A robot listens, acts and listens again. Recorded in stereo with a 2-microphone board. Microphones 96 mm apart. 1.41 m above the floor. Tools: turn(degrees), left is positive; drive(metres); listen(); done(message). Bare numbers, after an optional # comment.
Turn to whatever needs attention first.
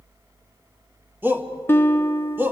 # The shout: about 20° right or 160° right.
turn(-20)
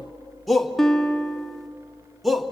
done("Found it: a shout, straight ahead, 1 to 2 m away.")